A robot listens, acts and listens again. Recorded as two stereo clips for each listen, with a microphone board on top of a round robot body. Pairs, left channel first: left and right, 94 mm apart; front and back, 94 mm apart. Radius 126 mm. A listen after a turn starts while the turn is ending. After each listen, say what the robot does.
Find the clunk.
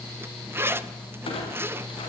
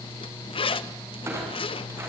Turn 115° left.
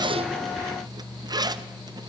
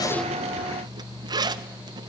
I heard a clunk from this way, but can't make it out now.